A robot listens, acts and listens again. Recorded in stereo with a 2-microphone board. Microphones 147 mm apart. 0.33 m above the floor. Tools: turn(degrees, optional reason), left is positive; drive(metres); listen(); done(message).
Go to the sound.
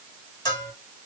turn(degrees=25, reason="The bell: about 25° left or 155° left.")
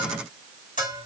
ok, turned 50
turn(degrees=100, reason="So it is at 100° left.")
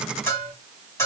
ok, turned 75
turn(degrees=25, reason="The bell is now 25° left.")
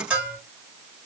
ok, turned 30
drive(metres=1.0)
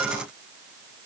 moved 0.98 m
listen()
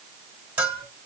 turn(degrees=-15, reason="The bell is now 15° right.")
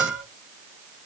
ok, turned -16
drive(metres=1.0)
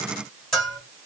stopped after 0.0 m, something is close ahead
done("Arrived at the bell, straight ahead.")